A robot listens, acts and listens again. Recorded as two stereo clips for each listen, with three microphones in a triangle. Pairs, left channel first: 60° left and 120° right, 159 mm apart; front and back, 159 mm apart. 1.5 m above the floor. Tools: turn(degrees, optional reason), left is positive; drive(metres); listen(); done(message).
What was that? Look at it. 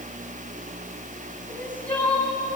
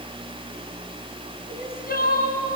turn(degrees=-20, reason="The crying: 20° right.")
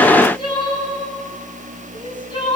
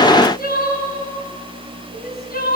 done("Found it: crying, straight ahead, over 4 m away.")